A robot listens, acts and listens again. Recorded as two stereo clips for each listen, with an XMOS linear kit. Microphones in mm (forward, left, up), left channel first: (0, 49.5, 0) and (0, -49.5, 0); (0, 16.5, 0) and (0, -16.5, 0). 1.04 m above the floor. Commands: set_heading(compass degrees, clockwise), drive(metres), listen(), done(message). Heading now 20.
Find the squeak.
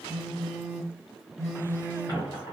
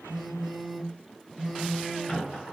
set_heading(340)
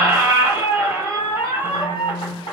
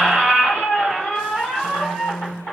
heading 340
set_heading(245)
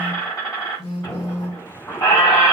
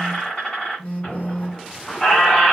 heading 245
set_heading(195)
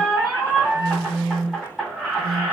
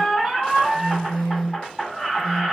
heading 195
done("Facing the squeak, 1 to 2 m away.")